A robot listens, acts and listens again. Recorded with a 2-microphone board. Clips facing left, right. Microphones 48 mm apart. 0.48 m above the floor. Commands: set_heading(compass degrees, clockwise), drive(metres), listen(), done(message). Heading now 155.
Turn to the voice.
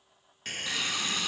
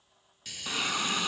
listen()
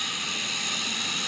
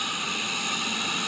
listen()
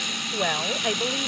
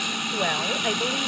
set_heading(125)
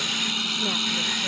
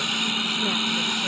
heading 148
listen()
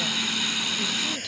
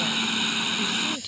listen()
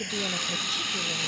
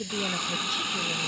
set_heading(118)
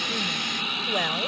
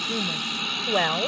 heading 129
set_heading(149)
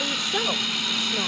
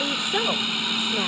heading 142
set_heading(152)
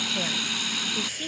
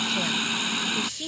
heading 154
done("Found it: a woman speaking, straight ahead.")